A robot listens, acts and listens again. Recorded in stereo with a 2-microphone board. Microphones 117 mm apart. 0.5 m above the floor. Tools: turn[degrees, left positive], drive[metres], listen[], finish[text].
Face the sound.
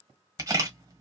Thought: The camera shutter: about 30° right or 150° right.
Action: turn[-30]
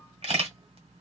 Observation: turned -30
Thought: So it is at 120° right.
Action: turn[-120]
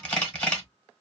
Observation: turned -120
Thought: The camera shutter is now 10° left.
Action: turn[10]
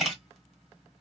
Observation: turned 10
Action: finish[Facing the camera shutter.]